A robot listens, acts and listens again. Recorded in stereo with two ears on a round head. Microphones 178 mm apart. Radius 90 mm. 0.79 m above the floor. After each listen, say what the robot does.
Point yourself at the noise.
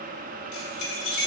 Turn 65° left.
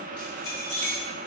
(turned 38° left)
Turn 10° left.
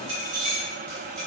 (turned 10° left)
Turn 25° right.
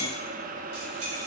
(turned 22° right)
Keep listening.
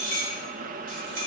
Turn 45° right.
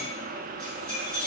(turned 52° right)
Facing the keys jangling.